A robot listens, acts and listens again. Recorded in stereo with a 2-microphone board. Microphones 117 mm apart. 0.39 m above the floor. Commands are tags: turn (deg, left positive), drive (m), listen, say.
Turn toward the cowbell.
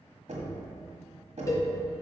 <turn deg="30"/>
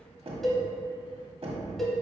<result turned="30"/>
<say>Facing the cowbell, 1 to 2 m away.</say>